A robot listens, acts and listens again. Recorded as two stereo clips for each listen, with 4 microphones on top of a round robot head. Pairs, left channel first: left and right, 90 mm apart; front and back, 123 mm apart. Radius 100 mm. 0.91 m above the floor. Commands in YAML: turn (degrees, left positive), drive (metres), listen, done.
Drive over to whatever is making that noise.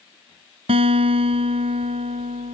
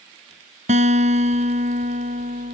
turn: -135
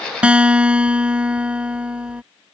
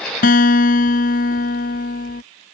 turn: -15
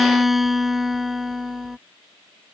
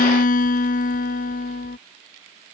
drive: 1.0
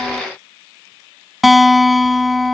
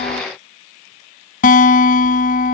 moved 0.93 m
drive: 1.0
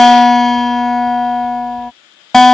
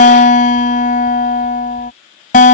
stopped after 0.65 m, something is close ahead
done: "Arrived at the guitar, straight ahead."